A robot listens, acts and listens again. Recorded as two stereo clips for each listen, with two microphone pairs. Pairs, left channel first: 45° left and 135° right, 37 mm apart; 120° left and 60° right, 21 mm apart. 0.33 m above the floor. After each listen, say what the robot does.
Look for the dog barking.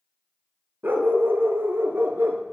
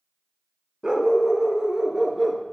Turn 125° right.
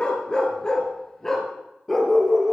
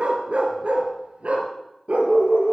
Turn 40° right.
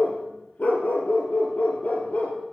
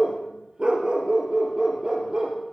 Found it: a dog barking, straight ahead, 2 to 4 m away.